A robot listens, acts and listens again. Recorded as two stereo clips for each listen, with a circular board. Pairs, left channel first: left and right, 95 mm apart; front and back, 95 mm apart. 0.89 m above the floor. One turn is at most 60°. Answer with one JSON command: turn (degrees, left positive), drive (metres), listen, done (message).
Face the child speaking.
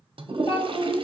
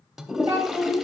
{"turn": 60}
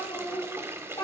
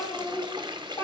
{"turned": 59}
{"turn": 50}
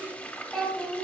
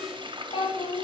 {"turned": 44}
{"done": "Found it: a child speaking, straight ahead, 2 to 4 m away."}